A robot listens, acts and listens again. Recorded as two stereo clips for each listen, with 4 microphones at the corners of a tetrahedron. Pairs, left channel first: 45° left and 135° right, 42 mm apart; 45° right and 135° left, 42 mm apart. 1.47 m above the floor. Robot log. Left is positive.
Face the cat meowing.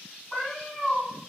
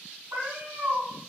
note: The cat meowing: 135° left.
cmd yaw +135
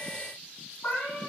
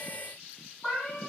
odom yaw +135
note: The cat meowing is now 35° left.
cmd yaw +35
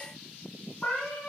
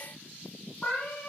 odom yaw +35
end: Found it: a cat meowing, straight ahead.